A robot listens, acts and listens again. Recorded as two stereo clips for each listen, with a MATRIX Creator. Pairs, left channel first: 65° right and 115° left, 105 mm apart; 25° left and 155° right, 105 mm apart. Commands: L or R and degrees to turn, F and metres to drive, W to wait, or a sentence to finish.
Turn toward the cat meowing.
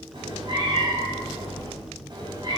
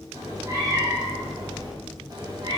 L160
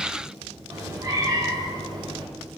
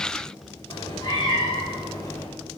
L75
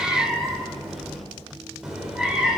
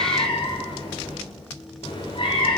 L30
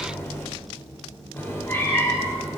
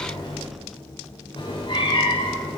Found it: a cat meowing, straight ahead, 2 to 4 m away.